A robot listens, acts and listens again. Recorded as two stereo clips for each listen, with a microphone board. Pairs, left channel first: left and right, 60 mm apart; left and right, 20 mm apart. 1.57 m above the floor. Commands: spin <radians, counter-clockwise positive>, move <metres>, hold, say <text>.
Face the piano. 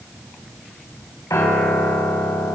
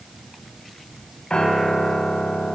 spin 1.05
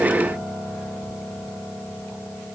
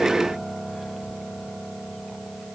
spin 0.96
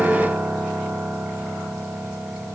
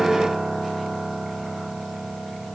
spin -0.26
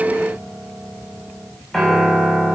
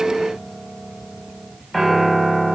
say Found it: a piano, straight ahead.